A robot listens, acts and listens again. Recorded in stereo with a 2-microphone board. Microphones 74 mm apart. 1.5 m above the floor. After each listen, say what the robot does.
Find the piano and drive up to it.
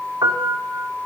Turn 70° right.
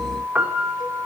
Turn 20° right.
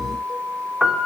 Drive 1.0 m forward.
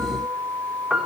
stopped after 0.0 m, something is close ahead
Something is in my way. I am facing the piano but have not reached it.